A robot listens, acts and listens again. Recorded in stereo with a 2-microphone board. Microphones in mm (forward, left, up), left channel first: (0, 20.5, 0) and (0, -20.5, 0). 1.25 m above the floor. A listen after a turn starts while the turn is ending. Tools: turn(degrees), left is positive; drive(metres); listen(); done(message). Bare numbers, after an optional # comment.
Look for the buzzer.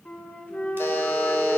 # The buzzer: about 70° left or 110° left.
turn(70)
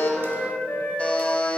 # So it is at 35° left.
turn(35)
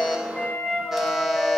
listen()
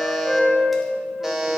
done("Facing the buzzer.")